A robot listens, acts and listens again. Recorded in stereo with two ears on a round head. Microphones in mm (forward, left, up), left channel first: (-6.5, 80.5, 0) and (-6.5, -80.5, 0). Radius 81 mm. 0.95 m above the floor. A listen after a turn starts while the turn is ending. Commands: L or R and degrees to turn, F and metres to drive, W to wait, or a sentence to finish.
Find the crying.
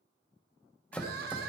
R60
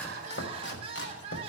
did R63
R35
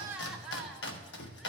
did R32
Facing the crying, under 1 m away.